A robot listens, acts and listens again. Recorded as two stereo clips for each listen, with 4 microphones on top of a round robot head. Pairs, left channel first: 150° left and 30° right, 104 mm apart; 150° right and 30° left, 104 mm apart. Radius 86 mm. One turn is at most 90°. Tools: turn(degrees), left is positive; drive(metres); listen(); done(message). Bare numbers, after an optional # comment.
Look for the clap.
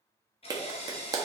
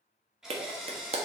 # The clap: 20° left.
turn(20)
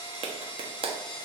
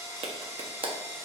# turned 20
done("Found it: a clap, straight ahead.")